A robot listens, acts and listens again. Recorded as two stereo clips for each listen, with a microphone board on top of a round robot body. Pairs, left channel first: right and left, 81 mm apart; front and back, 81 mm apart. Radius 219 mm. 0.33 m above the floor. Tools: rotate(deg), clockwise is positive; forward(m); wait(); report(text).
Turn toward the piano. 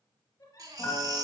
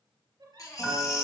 rotate(75)
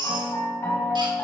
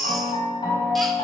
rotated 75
rotate(30)
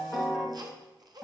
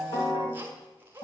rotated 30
report("Found it: a piano, straight ahead.")